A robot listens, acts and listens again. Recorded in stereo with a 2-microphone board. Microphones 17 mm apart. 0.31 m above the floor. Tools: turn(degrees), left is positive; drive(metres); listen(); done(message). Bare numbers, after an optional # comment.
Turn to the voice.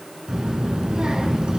# The child speaking: about 75° right or 105° right.
turn(-75)
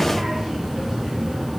# So it is at 25° right.
turn(-25)
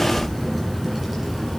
done("Facing the child speaking.")